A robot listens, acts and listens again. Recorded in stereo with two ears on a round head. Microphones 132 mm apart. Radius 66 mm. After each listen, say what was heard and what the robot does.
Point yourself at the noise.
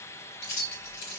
Turn 90° left.
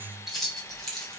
Found it: keys jangling, straight ahead, 2 to 4 m away.